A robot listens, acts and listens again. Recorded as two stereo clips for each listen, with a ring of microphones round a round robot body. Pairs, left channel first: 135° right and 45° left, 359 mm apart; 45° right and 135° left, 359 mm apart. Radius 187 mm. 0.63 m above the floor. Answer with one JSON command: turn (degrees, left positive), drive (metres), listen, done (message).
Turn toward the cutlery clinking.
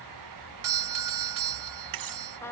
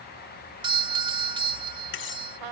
{"turn": 10}
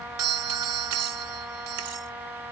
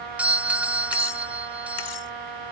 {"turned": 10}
{"listen": true}
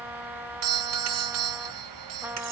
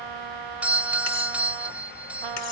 {"listen": true}
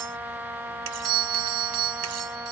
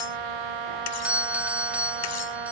{"done": "I heard cutlery clinking from this way, but can't make it out now."}